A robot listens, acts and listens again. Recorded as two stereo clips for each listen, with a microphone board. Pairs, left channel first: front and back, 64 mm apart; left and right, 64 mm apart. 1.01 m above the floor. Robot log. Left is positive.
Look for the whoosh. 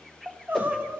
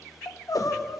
note: The whoosh: 85° left.
cmd yaw +85
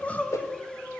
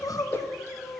note: The whoosh is now 35° left.
cmd yaw +35
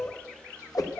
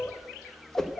note: The whoosh is now 10° left.
cmd yaw +10
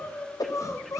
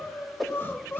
end: Found it: a whoosh, straight ahead, under 1 m away.